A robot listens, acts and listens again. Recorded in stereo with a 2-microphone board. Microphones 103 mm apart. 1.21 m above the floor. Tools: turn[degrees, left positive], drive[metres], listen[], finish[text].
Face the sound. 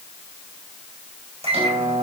Action: turn[-90]
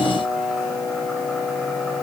Action: finish[Found it: a microwave, straight ahead, over 4 m away.]